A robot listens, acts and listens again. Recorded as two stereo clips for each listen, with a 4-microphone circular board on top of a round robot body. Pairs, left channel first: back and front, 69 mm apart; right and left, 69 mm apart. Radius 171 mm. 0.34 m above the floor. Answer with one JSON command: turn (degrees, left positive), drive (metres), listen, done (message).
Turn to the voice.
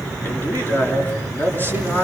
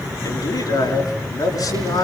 {"turn": -115}
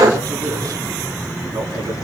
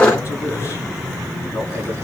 {"listen": true}
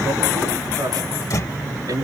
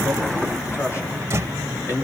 {"turn": -40}
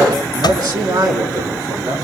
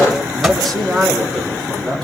{"done": "Found it: a man speaking, straight ahead."}